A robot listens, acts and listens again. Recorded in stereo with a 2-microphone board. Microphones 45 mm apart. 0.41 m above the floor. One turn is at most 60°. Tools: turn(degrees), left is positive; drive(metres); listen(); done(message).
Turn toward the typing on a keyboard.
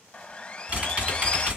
turn(degrees=-30)
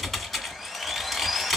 done("Facing the typing on a keyboard, 1 to 2 m away.")